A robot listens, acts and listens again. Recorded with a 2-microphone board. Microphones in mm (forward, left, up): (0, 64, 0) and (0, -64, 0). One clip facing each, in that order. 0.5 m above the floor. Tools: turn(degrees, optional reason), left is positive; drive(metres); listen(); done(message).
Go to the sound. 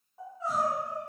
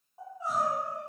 turn(degrees=-15, reason="The crying: about 15° right or 165° right.")
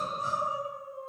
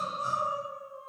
turn(degrees=-155, reason="So it is at 155° right.")
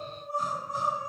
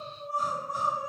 turn(degrees=-25, reason="The crying is now 25° right.")
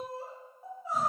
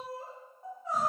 turn(degrees=10, reason="The crying is now 10° left.")
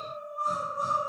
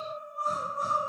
drive(metres=1.0)
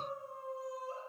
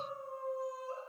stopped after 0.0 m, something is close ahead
done("Blocked. The crying is further on, straight ahead.")